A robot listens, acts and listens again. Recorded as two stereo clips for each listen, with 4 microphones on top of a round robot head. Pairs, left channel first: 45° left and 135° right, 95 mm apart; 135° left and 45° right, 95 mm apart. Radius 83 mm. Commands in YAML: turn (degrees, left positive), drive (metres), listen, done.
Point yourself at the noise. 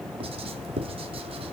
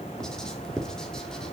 turn: -140
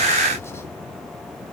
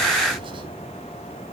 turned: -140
listen: true
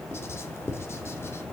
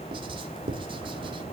turn: -20
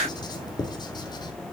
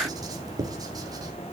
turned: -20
done: "Found it: writing, straight ahead, 2 to 4 m away."